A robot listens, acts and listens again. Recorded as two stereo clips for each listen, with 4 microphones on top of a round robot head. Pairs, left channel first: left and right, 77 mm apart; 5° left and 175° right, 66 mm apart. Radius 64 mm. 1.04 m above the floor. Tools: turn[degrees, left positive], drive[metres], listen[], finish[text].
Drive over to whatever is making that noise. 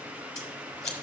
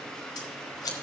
Thought: The scissors: 10° left.
Action: turn[10]
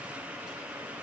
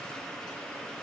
Action: listen[]
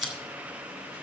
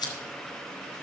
Action: drive[1.0]
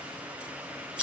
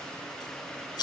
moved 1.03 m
Thought: The scissors is now 10° right.
Action: turn[-10]
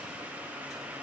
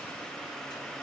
Action: listen[]
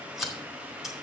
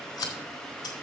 Action: drive[1.0]
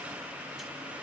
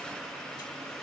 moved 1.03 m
Action: listen[]
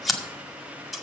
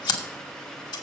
Action: drive[1.0]
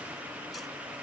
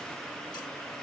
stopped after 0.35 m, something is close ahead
Action: listen[]
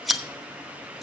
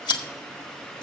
Action: finish[I am next to the scissors.]